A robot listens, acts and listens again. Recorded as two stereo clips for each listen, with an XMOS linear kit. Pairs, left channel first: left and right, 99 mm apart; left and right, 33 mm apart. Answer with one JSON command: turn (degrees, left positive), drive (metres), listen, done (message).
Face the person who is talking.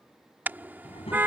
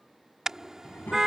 {"turn": 90}
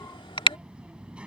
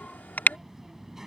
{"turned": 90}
{"turn": -10}
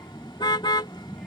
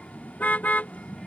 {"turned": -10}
{"done": "Found it: a child speaking, straight ahead."}